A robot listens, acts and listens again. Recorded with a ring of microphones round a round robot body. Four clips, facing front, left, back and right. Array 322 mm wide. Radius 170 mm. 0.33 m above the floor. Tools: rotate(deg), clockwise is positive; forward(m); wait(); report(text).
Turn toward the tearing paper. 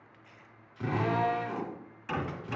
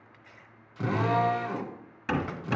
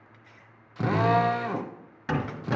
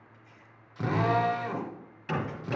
rotate(-100)
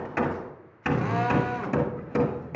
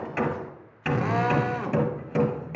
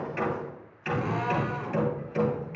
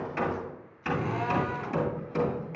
wait()
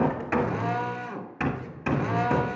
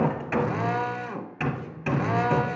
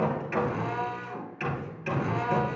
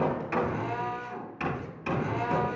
wait()
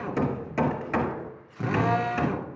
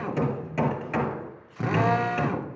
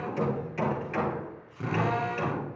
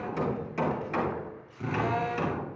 report("Facing where the tearing paper came from. I can't hear it now.")